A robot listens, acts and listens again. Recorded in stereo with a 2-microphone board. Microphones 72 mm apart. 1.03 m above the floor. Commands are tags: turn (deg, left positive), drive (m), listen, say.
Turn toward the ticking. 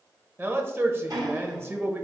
<turn deg="-65"/>
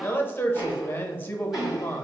<turn deg="-10"/>
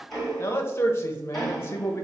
<say>Found it: ticking, straight ahead.</say>